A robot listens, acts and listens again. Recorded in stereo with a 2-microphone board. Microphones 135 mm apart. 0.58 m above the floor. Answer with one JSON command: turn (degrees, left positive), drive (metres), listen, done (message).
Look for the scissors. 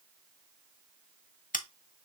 {"turn": 75}
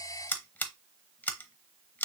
{"turn": 15}
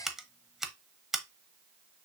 {"done": "Facing the scissors."}